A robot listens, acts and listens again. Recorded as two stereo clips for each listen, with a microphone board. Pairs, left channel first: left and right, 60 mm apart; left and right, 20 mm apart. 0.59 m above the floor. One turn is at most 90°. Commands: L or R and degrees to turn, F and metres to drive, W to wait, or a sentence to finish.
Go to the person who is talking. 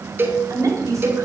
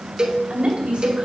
R60
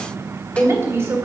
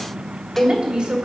R50
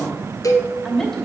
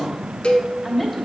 F1.0
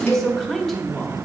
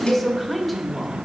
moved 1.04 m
F1.0
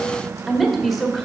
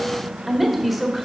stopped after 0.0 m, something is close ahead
I am next to the woman speaking.